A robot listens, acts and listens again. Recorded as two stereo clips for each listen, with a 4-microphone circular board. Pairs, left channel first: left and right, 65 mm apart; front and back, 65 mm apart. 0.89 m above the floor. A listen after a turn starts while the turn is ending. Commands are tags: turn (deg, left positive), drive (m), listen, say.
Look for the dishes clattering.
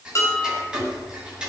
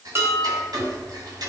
<turn deg="130"/>
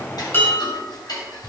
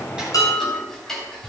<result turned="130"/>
<turn deg="20"/>
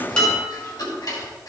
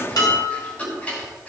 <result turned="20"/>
<say>Found it: dishes clattering, straight ahead.</say>